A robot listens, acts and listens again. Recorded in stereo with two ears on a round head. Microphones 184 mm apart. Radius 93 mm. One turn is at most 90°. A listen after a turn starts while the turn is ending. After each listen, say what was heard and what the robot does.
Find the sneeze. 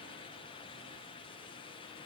Keep listening.
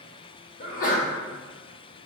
The sneeze: about 40° left or 140° left. Turn 40° left.
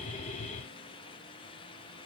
Keep listening.
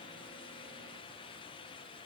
I heard a sneeze, but can't make it out now. It was about straight ahead or 100° left.